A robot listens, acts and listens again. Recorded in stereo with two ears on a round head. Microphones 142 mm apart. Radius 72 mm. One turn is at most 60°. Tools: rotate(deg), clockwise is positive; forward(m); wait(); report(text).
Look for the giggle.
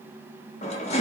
wait()
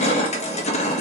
wait()
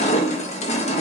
report("I can't make out a giggle to turn to.")